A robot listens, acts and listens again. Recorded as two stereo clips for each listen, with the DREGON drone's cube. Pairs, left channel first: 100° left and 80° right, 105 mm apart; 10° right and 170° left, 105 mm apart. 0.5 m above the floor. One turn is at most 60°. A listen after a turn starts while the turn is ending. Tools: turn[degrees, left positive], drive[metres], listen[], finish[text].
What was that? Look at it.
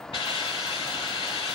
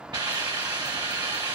Thought: The hiss: 130° left.
Action: turn[60]
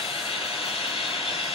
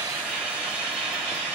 Thought: The hiss is now 90° left.
Action: turn[60]
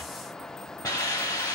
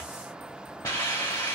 Thought: The hiss is now 45° left.
Action: turn[45]
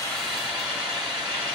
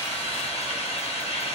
Action: finish[Found it: a hiss, straight ahead.]